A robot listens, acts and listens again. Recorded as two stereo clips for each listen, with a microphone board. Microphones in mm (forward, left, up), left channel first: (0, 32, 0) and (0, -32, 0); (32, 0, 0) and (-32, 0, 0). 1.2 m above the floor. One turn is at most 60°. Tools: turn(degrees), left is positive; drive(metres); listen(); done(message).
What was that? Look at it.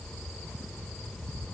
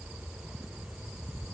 listen()
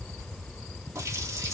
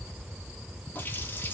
turn(degrees=-55)
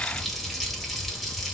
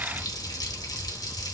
done("Found it: a running tap, straight ahead.")